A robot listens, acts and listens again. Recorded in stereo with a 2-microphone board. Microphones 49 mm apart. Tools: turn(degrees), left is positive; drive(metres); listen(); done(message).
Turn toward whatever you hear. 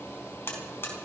turn(degrees=50)
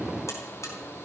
listen()
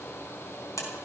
turn(degrees=85)
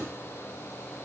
listen()
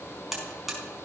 done("Facing the buzzer, over 4 m away.")